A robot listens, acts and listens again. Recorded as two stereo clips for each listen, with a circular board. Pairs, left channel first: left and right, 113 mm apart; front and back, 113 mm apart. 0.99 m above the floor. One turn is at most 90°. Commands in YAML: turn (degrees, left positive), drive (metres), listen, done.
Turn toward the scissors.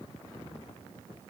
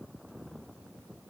listen: true
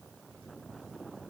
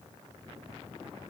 listen: true
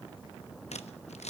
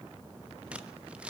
turn: 90
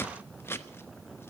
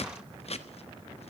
turn: 20
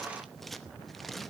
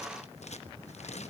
done: "Found it: scissors, straight ahead, under 1 m away."